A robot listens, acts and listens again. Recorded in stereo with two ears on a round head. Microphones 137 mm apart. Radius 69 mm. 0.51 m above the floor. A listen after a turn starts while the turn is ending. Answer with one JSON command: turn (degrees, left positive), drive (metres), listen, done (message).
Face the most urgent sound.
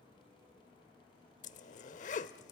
{"listen": true}
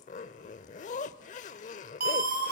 {"turn": -70}
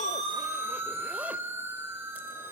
{"turn": -20}
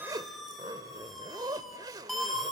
{"done": "Found it: a siren, straight ahead, 2 to 4 m away."}